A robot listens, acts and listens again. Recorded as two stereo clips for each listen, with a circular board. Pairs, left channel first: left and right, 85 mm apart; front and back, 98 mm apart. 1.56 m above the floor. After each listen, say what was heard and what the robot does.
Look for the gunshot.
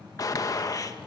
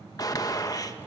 The gunshot: 45° left. Turn 45° left.
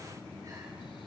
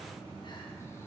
I heard a gunshot from this way, but can't make it out now.